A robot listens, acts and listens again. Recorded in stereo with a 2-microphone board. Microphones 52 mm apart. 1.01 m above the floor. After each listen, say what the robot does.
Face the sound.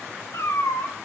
Turn 70° left.
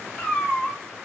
Turn 10° left.
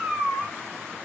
Turn 15° right.
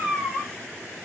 Turn 15° right.
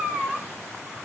Turn 10° right.
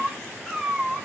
Turn 10° right.
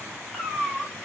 Found it: a cat meowing, straight ahead.